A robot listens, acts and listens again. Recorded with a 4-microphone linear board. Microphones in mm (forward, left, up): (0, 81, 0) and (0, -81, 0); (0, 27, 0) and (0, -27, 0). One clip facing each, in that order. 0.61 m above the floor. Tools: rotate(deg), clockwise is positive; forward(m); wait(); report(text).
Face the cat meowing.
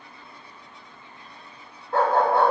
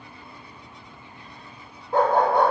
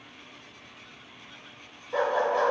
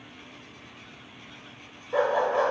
wait()
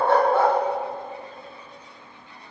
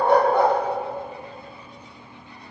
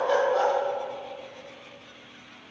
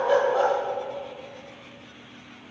wait()
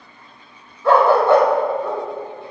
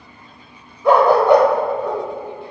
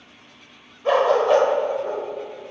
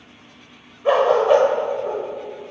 report("I can't make out a cat meowing, only a dog barking.")